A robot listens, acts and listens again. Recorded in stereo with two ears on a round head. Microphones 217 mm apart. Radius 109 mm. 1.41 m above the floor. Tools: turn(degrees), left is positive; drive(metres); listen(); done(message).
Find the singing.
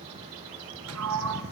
listen()
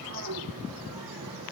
listen()
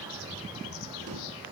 done("I can't make out singing to turn to.")